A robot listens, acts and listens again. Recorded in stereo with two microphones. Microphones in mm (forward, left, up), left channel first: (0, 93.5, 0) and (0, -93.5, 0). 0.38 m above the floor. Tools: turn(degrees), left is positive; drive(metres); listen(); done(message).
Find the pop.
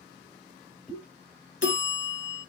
turn(degrees=30)
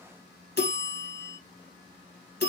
listen()
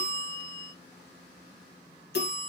done("I heard a pop, but can't make it out now. It was about 25° right or 145° left.")